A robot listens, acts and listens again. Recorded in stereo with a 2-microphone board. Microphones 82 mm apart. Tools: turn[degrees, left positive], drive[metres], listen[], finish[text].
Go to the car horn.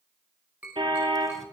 Action: turn[-90]
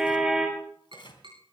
Action: drive[1.0]
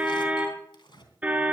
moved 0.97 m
Thought: The car horn is now 20° right.
Action: turn[-20]
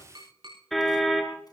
Action: drive[1.0]
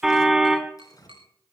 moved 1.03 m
Action: drive[1.0]
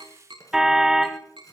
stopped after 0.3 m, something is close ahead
Action: finish[Arrived at the car horn, straight ahead.]